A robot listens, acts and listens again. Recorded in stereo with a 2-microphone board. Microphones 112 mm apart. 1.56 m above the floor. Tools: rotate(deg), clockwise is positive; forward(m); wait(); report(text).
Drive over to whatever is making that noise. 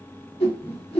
rotate(-60)
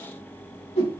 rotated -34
rotate(-75)
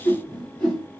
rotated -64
rotate(-10)
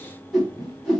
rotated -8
forward(1.0)
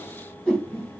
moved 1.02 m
forward(1.0)
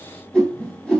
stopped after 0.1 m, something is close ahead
rotate(-10)
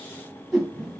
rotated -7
report("I am next to the whoosh.")